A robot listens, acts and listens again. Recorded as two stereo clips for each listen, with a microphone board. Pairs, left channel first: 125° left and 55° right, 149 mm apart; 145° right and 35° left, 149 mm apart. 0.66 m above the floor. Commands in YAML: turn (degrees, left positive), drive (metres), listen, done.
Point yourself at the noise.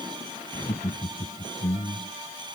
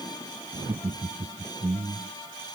turn: 75
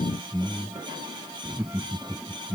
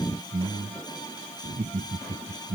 turn: 20
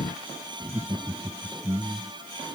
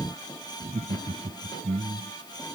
turn: 10
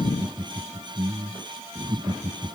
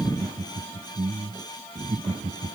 done: "Facing the laughter."